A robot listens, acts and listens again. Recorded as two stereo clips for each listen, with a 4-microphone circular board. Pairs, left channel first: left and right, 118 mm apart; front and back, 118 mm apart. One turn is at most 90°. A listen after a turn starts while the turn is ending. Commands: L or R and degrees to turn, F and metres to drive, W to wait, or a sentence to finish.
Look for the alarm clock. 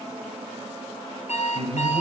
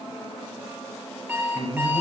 L90
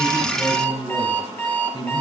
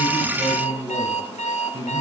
L15
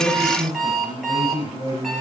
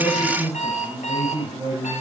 Facing the alarm clock, over 4 m away.